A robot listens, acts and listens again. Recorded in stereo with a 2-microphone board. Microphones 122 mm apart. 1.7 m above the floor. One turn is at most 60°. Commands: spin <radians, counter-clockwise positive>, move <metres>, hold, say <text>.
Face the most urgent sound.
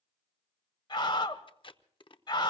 spin 0.61
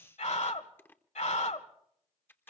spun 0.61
spin 1.05
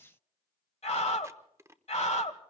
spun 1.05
spin 1.05
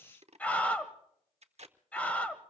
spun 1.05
spin 0.17
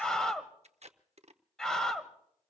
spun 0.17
say Facing the scream.